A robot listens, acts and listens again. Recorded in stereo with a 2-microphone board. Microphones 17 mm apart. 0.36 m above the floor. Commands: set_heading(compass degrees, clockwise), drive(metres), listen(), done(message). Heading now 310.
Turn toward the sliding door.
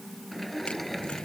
set_heading(280)
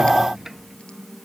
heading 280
set_heading(300)
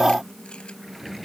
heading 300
done("Found it: a sliding door, straight ahead.")